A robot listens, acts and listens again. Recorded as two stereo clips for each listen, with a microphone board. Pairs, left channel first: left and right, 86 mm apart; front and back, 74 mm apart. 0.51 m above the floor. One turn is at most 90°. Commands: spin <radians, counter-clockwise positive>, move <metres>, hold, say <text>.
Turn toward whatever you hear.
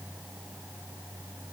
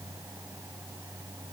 hold
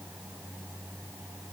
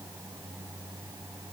hold
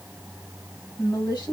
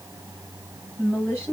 spin 1.05
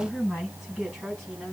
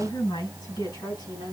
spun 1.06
say Found it: a woman speaking, straight ahead, over 4 m away.